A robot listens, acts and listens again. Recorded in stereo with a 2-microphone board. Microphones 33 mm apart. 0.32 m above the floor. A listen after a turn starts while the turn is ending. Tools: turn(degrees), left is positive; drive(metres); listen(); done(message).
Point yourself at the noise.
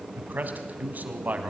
turn(degrees=-55)
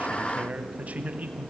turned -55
turn(degrees=-55)
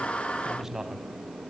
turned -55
turn(degrees=-20)
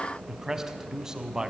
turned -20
turn(degrees=-25)
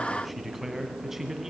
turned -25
turn(degrees=-10)
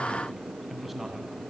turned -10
done("Facing the man speaking, 2 to 4 m away.")